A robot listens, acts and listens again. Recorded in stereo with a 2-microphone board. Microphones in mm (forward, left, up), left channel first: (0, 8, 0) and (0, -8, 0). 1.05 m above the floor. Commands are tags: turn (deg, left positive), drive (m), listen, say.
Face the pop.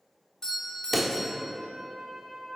<turn deg="30"/>
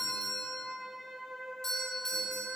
<listen/>
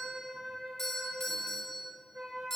<say>I heard a pop, but can't make it out now. It was about 20° right or 140° left.</say>